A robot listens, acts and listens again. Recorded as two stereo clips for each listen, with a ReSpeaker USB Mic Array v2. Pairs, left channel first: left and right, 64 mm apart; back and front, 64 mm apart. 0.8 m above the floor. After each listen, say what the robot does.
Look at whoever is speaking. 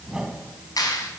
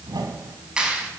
Keep listening.
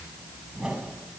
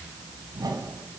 Keep listening.
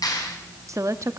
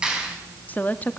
Turn 120° right.
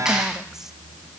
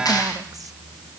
Keep listening.
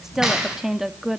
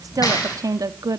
Turn 10° right.
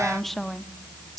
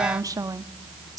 Facing the woman speaking, 1 to 2 m away.